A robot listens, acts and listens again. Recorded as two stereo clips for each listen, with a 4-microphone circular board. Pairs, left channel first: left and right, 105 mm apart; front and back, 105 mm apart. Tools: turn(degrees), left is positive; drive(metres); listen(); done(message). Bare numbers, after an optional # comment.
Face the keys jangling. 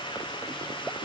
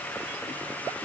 listen()
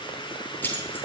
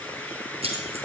# The keys jangling: 160° left.
turn(160)
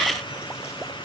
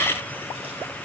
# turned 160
listen()
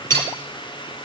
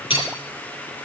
# The keys jangling is now 25° left.
turn(25)
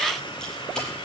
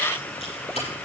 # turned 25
listen()
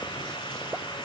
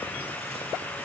done("Facing the keys jangling, over 4 m away.")